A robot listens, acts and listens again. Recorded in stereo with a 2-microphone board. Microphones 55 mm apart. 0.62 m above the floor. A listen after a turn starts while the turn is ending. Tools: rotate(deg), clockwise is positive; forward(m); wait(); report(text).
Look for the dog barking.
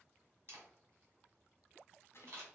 wait()
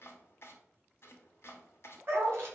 rotate(45)
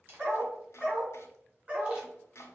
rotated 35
rotate(20)
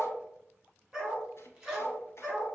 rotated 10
rotate(10)
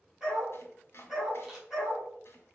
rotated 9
report("Found it: a dog barking, straight ahead, 2 to 4 m away.")